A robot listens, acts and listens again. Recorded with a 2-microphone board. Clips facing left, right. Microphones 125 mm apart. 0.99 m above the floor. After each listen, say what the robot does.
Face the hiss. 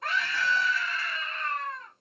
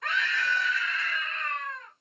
Keep listening.
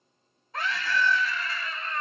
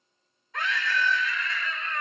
Keep listening.
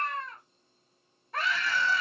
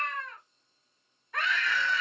I can't make out a hiss, only a scream.